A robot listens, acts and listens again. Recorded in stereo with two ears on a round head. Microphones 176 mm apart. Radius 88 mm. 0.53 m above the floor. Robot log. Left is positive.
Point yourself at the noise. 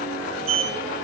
cmd yaw -90
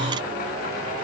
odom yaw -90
cmd idle
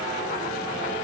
cmd idle
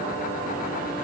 end: Facing where the sliding door came from. I can't hear it now.